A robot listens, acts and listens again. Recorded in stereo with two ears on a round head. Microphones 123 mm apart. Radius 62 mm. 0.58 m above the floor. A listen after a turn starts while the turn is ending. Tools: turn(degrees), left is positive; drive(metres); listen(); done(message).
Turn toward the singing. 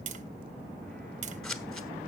listen()
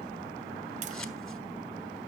listen()
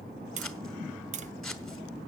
done("I can't make out singing to turn to.")